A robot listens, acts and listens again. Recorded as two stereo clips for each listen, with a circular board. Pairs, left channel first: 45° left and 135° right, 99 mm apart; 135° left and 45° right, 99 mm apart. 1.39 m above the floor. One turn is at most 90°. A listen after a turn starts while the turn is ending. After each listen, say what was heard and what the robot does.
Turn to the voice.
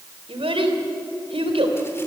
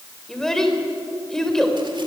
The child speaking: 140° right. Turn 90° right.
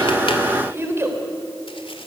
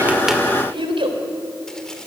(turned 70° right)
The child speaking is now 70° right. Turn 70° right.
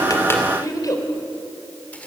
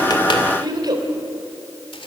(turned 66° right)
Found it: a child speaking, straight ahead, 2 to 4 m away.